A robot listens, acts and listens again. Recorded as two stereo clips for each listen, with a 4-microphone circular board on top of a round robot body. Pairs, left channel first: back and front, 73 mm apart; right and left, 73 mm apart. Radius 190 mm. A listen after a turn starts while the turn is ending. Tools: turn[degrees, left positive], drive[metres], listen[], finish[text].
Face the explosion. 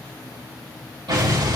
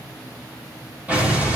Thought: The explosion: 20° left.
Action: turn[20]
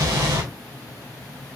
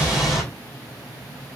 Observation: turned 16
Action: finish[Found it: an explosion, straight ahead.]